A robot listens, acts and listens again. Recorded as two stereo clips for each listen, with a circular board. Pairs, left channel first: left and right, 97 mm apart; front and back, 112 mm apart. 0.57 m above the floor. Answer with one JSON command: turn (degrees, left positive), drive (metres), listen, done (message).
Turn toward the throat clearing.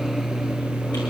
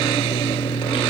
{"listen": true}
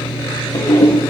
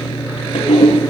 {"listen": true}
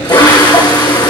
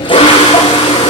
{"done": "I can't make out throat clearing to turn to."}